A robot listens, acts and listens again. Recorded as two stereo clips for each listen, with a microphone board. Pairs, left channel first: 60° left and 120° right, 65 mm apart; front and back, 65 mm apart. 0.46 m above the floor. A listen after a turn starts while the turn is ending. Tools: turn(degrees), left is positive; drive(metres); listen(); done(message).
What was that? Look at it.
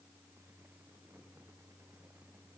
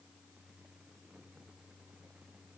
listen()
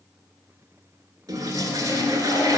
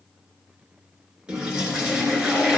turn(degrees=-105)
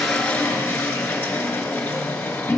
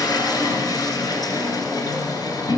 done("Found it: a toilet flushing, straight ahead, 1 to 2 m away.")